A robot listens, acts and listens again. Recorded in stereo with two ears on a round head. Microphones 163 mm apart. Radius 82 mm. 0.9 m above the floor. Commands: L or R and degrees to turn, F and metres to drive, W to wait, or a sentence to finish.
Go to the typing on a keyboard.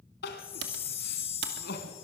R65
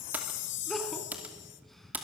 R10
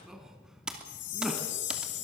F1.0
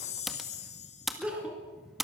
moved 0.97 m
F1.0
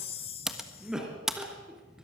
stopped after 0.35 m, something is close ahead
Arrived at the typing on a keyboard, straight ahead.